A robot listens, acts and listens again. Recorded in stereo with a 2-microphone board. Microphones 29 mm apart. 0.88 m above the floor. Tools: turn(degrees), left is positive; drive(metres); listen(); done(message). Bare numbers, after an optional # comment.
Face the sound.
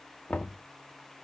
# The knocking: about 65° left or 115° left.
turn(65)
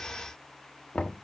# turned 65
# So it is at 50° left.
turn(50)
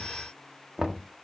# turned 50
# The knocking is now 20° right.
turn(-20)
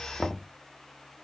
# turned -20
done("Facing the knocking.")